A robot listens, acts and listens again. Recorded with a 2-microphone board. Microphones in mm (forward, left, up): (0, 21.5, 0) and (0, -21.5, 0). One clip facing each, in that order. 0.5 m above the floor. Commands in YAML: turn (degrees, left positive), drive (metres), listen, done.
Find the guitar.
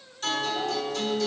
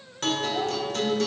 turn: -60
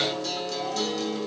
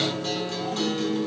turn: -35
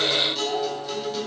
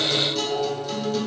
done: "Facing the guitar."